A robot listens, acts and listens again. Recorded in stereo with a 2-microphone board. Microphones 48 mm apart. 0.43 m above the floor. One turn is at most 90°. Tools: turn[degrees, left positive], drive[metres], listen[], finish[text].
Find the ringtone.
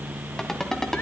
Action: turn[30]
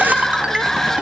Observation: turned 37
Action: listen[]
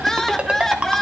Thought: So it is at 30° right.
Action: turn[-30]
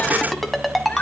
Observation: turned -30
Action: finish[Found it: a ringtone, straight ahead.]